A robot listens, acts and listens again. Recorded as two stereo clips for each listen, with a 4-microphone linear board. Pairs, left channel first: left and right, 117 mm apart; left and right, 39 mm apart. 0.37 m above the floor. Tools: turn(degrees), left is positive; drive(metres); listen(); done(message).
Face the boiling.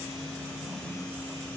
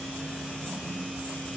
listen()
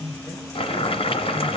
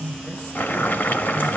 turn(degrees=55)
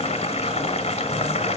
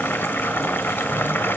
turn(degrees=65)
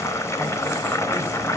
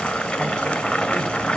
turn(degrees=25)
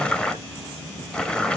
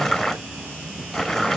turn(degrees=10)
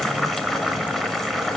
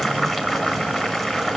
done("Found it: boiling, straight ahead, 1 to 2 m away.")